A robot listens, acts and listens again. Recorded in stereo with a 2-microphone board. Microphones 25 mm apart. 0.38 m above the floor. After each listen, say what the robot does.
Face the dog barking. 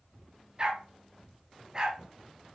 Turn 30° right.
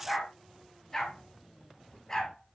Turn 20° left.
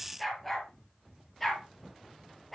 Facing the dog barking.